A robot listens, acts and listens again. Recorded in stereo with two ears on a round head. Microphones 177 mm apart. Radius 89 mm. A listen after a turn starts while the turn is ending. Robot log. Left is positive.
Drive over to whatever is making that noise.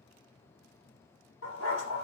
cmd yaw +90
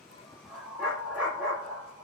cmd fwd 1.0
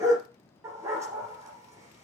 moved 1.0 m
note: The dog barking is now 15° right.
cmd yaw -15
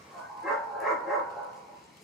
cmd fwd 1.0
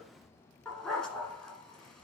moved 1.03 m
cmd fwd 1.0
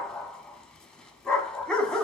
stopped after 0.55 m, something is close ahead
end: Arrived at the dog barking, straight ahead.